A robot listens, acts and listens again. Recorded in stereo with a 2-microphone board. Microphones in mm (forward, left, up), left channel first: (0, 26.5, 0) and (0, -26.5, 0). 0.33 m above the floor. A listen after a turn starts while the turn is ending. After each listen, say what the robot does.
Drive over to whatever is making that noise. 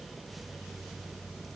Keep listening.
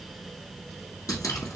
Turn 90° left.
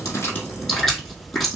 Drive 1.0 m forward.
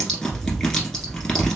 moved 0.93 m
Turn 15° left.
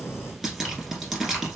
Drive 1.0 m forward.
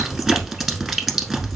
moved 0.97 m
Drive 1.0 m forward.
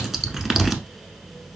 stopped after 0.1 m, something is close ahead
Arrived at the dripping, straight ahead.